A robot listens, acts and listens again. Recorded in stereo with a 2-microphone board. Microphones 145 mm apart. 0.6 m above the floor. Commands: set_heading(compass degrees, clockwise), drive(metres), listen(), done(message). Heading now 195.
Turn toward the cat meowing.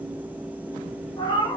set_heading(170)
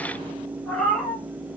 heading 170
done("Found it: a cat meowing, straight ahead.")